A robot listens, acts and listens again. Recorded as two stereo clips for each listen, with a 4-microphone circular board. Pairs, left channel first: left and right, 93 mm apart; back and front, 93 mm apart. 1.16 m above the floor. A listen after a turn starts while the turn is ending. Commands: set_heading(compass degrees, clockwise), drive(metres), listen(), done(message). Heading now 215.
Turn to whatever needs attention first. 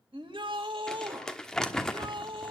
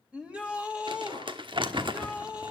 set_heading(290)
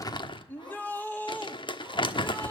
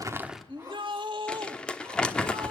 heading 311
set_heading(291)
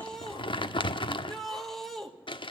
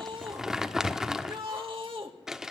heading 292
done("Found it: a shout, straight ahead, 2 to 4 m away.")